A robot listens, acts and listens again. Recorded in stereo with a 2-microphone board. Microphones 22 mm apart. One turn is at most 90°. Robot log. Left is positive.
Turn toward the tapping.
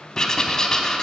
cmd idle
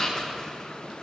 cmd idle
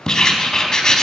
end: I can't make out tapping to turn to.